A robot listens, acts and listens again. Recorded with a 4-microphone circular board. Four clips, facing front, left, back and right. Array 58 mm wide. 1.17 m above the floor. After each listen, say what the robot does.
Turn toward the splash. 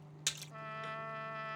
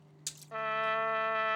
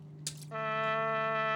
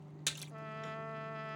Turn 55° right.
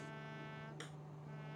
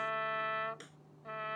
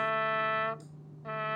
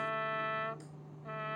I heard a splash from this way, but can't make it out now.